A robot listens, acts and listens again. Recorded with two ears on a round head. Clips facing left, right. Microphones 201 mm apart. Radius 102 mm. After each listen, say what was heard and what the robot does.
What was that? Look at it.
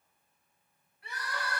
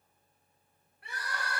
The crying: about 50° right or 130° right. Turn 50° right.
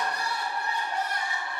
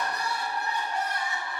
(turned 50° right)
So it is at 80° right. Turn 80° right.
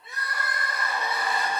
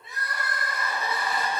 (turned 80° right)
Facing the crying, 2 to 4 m away.